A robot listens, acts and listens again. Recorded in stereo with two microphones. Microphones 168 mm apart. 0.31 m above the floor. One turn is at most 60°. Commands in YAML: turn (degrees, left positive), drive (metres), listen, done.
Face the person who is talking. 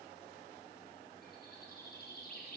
listen: true
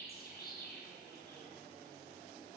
listen: true
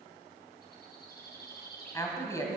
turn: 20
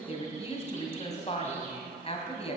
turn: 60
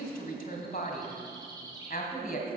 turn: 60
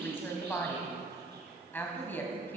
turn: 15
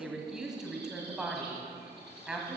done: "Found it: a woman speaking, straight ahead."